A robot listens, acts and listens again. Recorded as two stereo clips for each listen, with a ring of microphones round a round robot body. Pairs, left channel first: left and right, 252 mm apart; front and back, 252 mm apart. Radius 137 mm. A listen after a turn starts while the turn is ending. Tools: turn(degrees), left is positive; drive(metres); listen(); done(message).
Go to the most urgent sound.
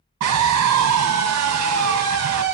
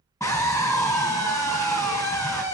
turn(degrees=-80)
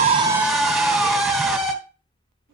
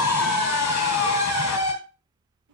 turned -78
drive(metres=1.0)
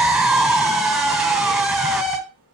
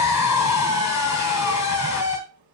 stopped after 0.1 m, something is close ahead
done("Blocked. The scream is further on, straight ahead.")